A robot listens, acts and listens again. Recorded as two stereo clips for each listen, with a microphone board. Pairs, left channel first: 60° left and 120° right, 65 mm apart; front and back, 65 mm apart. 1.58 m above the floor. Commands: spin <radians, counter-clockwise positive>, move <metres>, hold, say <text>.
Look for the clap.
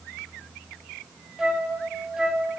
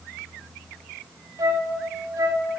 hold
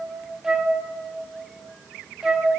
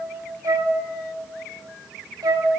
hold
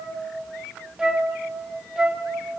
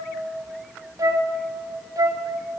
say I can't make out a clap to turn to.